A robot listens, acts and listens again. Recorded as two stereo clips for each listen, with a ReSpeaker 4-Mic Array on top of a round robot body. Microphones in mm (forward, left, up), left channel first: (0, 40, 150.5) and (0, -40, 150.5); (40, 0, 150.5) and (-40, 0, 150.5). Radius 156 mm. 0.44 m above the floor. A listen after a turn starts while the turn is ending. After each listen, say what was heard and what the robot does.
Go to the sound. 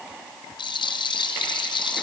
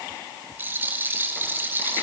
The rattle: 115° left. Turn 115° left.
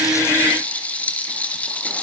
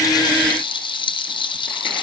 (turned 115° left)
The rattle is now 15° left. Turn 15° left.
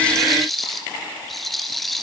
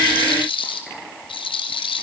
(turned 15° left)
Drive 1.0 m forward.
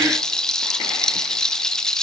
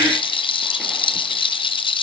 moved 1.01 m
The rattle is now 10° left. Turn 10° left.
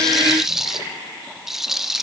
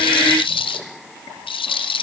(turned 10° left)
Drive 1.0 m forward.
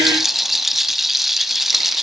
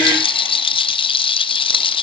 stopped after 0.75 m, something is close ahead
I am next to the rattle.